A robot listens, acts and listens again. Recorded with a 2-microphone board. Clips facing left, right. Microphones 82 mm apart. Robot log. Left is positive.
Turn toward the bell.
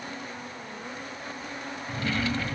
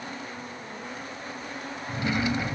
cmd idle
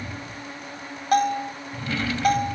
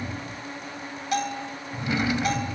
note: The bell: about 45° left or 135° left.
cmd yaw +45
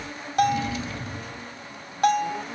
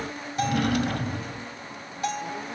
note: So it is at 80° left.
cmd yaw +80
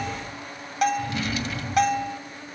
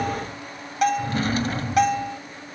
end: Found it: a bell, straight ahead, under 1 m away.